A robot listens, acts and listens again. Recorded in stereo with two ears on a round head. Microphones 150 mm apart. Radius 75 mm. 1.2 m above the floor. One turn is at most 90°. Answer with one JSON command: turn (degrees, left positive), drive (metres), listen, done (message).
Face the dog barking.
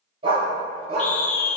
{"turn": -40}
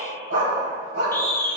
{"turn": -90}
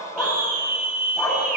{"done": "Found it: a dog barking, straight ahead."}